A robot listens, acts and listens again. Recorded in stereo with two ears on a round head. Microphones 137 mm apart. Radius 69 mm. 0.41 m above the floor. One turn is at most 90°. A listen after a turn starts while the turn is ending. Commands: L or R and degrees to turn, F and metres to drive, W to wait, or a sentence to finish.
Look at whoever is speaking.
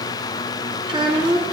R30
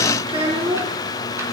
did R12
R35
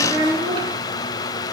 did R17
R45
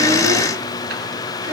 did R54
W
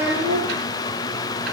R85
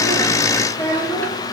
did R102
L15
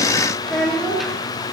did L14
Facing the child speaking, over 4 m away.